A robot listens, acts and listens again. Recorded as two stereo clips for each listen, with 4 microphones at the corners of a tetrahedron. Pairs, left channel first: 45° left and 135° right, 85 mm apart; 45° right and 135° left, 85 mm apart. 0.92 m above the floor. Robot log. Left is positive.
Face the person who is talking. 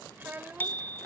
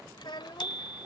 note: The child speaking: 70° right.
cmd yaw -70
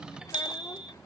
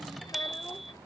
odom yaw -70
cmd idle
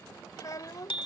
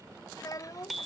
end: Facing the child speaking.